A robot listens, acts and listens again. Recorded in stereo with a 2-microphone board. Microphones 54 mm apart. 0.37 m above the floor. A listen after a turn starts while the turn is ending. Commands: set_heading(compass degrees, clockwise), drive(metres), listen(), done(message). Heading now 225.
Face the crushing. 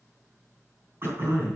listen()
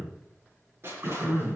set_heading(270)
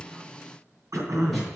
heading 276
listen()
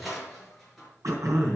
done("Facing the crushing.")